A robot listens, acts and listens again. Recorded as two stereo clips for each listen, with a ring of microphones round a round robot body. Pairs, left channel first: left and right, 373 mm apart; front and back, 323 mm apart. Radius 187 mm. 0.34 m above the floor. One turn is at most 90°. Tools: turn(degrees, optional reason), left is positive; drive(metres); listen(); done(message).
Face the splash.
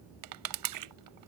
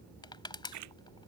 turn(degrees=-90, reason="The splash: 130° right.")
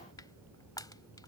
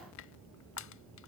turn(degrees=-40, reason="Nothing new. It was at 40° right.")
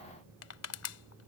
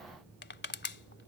done("Facing where the splash came from. I can't hear it now.")